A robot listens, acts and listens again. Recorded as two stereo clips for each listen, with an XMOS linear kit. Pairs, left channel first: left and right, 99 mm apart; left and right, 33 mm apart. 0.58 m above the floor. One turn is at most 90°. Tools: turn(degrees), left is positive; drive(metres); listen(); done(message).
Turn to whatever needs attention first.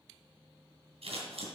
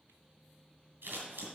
listen()
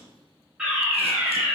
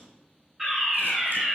turn(degrees=-30)
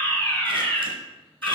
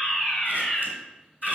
turn(degrees=20)
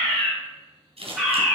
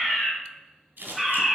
done("Facing the fire alarm, 2 to 4 m away.")